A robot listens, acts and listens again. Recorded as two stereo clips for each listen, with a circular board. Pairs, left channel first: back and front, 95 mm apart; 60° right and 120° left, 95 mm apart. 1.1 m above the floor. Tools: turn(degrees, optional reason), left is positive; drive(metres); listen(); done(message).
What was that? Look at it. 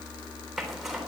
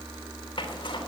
turn(degrees=-85, reason="The zipper: 85° right.")
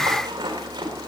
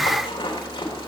turn(degrees=-40, reason="The zipper is now 40° right.")
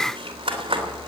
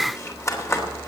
done("Facing the zipper, 2 to 4 m away.")